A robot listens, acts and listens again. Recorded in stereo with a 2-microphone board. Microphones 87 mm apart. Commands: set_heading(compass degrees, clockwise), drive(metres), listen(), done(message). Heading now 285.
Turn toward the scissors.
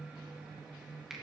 listen()
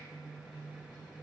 listen()
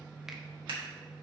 set_heading(15)
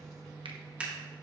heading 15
set_heading(30)
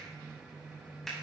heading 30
listen()
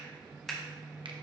done("Found it: scissors, straight ahead, 2 to 4 m away.")